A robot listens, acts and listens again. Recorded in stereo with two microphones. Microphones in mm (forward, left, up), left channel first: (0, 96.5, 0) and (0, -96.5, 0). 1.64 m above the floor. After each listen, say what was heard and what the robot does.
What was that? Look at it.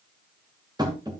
The tapping: about 20° right or 160° right. Turn 20° right.
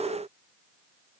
Keep listening.
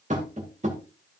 So it is at 140° right. Turn 140° right.
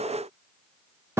The tapping is now 15° right. Turn 15° right.
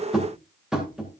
Facing the tapping.